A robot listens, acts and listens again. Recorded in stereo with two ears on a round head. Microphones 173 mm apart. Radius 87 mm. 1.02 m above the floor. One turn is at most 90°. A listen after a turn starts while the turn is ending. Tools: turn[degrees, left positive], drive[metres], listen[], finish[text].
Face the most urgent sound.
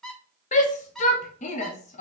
Thought: The shout: about 35° left or 145° left.
Action: turn[35]
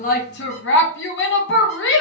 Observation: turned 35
Thought: So it is at 105° left.
Action: turn[90]
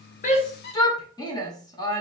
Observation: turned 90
Thought: The shout is now 20° left.
Action: turn[20]
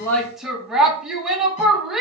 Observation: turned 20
Action: finish[Facing the shout, under 1 m away.]